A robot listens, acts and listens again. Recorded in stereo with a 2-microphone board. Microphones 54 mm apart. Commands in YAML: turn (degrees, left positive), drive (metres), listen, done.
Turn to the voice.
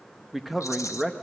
turn: -30
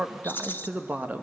turn: -145
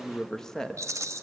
turn: 10
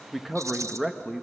done: "Facing the man speaking."